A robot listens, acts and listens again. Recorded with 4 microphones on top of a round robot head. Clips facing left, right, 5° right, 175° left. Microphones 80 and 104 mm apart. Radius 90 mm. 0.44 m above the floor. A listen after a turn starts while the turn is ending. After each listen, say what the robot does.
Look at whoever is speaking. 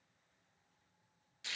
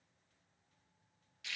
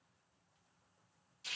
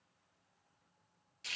Keep listening.
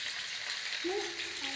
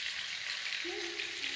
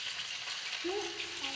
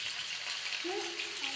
Turn 75° left.
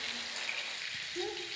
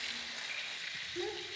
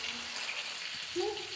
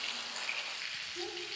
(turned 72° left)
Facing the child speaking.